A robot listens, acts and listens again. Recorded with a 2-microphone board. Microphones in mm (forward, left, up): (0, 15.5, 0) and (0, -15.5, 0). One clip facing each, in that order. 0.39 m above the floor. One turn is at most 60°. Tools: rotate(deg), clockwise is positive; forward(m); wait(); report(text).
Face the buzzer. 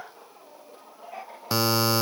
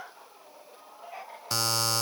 rotate(-30)
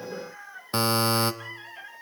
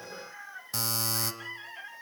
rotate(-60)
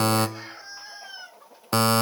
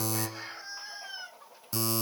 rotate(-60)
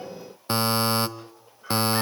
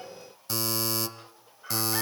rotate(-45)
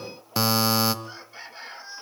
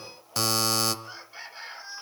rotate(-15)
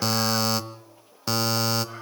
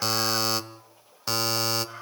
report("Found it: a buzzer, straight ahead.")